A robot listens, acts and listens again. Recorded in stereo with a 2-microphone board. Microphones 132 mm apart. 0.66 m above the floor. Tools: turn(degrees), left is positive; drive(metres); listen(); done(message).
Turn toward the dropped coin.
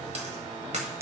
turn(degrees=-60)
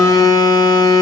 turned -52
listen()
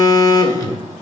done("I heard a dropped coin, but can't make it out now. It was about 5° right or 70° right.")